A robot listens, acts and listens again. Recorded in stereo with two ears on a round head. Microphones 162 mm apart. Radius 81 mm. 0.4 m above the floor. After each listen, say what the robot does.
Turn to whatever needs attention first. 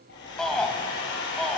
Turn 30° left.
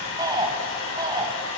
Turn 25° right.
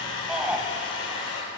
Found it: a shout, straight ahead, 2 to 4 m away.